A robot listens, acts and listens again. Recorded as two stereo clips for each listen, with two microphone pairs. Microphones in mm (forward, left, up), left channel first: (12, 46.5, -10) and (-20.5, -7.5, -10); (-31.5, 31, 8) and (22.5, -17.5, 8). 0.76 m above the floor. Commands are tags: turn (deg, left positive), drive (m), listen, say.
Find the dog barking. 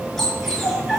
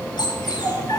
<turn deg="145"/>
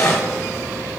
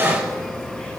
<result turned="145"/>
<turn deg="20"/>
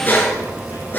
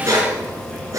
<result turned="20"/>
<say>Found it: a dog barking, straight ahead.</say>